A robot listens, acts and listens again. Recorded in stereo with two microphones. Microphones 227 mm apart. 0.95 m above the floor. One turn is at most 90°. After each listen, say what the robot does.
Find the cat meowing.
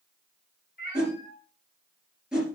Turn 45° left.
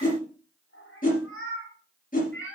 Turn 90° left.
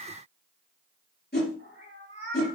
Turn 35° left.
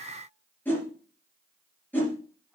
Keep listening.
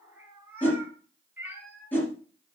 Found it: a cat meowing, straight ahead, 2 to 4 m away.